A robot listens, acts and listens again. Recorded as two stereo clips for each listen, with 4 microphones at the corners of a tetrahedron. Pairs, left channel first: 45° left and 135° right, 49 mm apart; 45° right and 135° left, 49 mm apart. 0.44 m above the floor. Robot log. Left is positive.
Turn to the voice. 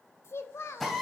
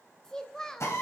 note: The child speaking: 30° left.
cmd yaw +30
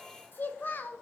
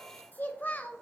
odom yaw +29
end: Facing the child speaking.